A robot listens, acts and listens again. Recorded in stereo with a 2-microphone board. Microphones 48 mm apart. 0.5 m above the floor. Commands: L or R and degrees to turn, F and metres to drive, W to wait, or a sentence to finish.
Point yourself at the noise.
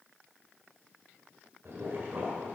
R60
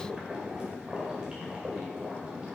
R25
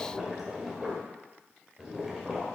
R10
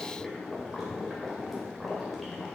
Facing the boiling, 2 to 4 m away.